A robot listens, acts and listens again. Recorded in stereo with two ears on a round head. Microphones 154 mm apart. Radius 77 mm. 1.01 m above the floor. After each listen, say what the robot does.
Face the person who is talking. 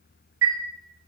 Keep listening.
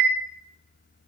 Keep listening.
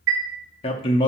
Turn 30° left.
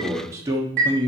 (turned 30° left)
Turn 25° right.
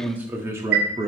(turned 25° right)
Turn 20° right.
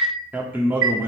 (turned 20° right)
Turn 15° right.
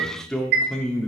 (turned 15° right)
Facing the man speaking, 1 to 2 m away.